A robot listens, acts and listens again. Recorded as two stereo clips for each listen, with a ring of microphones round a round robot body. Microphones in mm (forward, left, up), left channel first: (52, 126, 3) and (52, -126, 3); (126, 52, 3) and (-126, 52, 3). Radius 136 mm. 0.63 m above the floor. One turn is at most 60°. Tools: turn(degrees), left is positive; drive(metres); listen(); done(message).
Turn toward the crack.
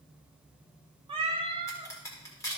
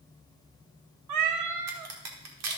turn(degrees=60)
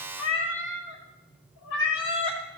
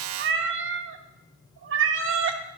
turn(degrees=60)
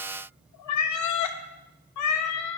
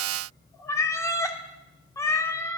turn(degrees=50)
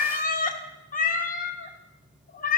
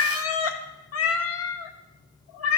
done("Facing where the crack came from. I can't hear it now.")